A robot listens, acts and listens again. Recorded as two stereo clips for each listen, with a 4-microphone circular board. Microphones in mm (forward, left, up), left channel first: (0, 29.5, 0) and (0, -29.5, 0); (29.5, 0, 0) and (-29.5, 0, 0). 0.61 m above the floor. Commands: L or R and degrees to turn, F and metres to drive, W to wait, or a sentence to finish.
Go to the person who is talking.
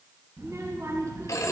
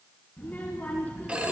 R60
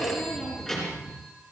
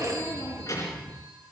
F1.0
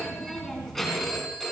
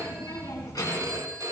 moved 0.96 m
F1.0
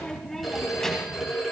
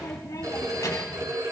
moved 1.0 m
L10
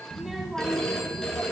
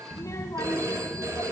F1.0
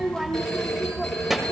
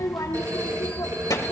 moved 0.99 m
F1.0
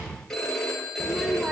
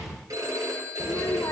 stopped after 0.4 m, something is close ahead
Arrived at the child speaking, straight ahead.